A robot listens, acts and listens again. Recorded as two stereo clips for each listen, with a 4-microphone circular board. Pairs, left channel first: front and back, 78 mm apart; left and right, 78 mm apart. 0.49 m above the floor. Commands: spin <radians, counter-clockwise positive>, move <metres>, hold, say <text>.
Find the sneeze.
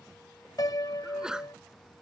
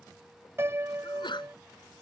spin 1.75
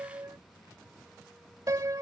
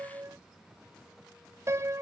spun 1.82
say Facing where the sneeze came from. I can't hear it now.